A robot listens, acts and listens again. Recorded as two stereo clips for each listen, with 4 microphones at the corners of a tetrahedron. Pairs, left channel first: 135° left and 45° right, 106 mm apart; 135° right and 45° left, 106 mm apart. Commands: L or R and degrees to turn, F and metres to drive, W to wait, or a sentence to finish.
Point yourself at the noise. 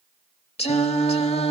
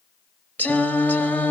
L150
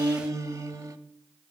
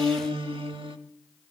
L10
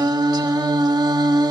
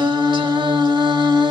Facing the singing.